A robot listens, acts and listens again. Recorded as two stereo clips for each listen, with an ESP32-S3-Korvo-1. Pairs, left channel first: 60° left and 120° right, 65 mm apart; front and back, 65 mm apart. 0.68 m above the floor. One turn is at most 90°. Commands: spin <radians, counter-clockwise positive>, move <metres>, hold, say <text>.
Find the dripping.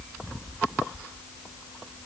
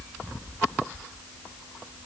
hold
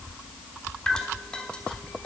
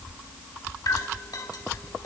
spin -0.26
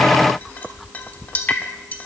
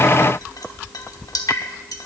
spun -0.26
say Found it: dripping, straight ahead, 1 to 2 m away.